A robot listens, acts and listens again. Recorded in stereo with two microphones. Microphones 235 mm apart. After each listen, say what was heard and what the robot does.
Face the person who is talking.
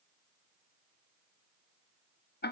Keep listening.
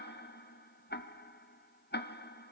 Keep listening.
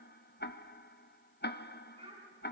The child speaking: about 25° right or 155° right. Turn 25° right.
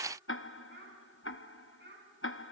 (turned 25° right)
So it is at 130° right. Turn 130° right.
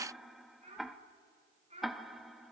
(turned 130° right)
The child speaking is now 30° right. Turn 30° right.
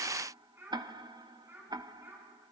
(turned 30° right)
The child speaking is now 10° right. Turn 10° right.
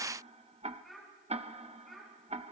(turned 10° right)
Found it: a child speaking, straight ahead.